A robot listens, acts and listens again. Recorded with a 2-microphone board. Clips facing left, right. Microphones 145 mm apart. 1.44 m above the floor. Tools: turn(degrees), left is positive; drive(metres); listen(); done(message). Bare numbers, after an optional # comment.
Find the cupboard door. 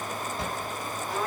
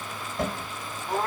# The cupboard door: about 60° right or 120° right.
turn(-60)
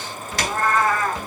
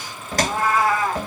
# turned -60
# So it is at 50° right.
turn(-50)
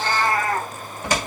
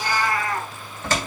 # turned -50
# The cupboard door is now 15° left.
turn(15)
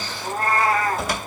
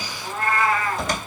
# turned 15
done("Facing the cupboard door, 2 to 4 m away.")